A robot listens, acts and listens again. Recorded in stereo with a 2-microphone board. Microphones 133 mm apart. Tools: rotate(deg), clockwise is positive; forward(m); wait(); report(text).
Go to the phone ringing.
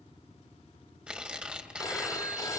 rotate(-25)
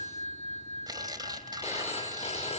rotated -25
rotate(-130)
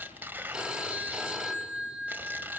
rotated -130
forward(1.0)
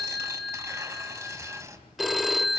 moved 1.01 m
forward(1.0)
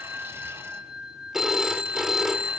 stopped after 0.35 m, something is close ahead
report("I am next to the phone ringing.")